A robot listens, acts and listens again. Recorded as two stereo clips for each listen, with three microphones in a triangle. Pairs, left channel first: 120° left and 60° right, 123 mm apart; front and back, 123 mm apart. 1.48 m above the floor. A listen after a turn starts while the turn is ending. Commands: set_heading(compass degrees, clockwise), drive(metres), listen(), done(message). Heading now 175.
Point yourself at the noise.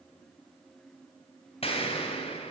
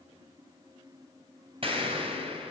set_heading(30)
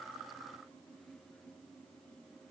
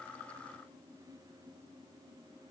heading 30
done("Facing where the explosion came from. I can't hear it now.")